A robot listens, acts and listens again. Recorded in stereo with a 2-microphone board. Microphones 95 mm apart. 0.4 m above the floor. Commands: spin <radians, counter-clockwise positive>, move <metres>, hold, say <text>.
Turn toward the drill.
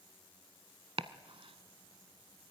hold
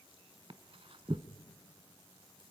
hold
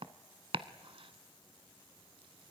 say I can't make out a drill to turn to.